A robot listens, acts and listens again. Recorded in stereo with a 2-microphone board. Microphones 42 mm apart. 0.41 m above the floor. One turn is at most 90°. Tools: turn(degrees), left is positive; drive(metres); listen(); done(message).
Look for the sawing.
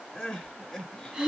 listen()
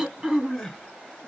listen()
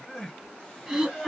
done("I can't make out sawing to turn to.")